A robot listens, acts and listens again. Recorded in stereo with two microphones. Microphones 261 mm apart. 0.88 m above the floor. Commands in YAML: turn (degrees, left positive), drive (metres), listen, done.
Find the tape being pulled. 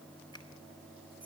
listen: true
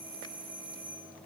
listen: true
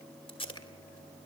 turn: 20
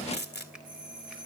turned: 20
turn: 140
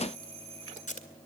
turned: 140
turn: 30
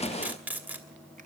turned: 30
done: "Found it: tape being pulled, straight ahead."